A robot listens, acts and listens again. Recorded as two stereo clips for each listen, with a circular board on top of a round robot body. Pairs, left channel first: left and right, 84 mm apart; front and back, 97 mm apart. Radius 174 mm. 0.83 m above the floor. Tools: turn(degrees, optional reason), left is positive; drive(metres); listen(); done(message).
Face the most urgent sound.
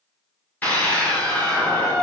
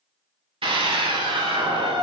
turn(degrees=160, reason="The scream: 160° left.")
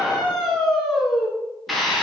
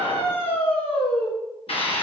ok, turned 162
done("Facing the scream, 2 to 4 m away.")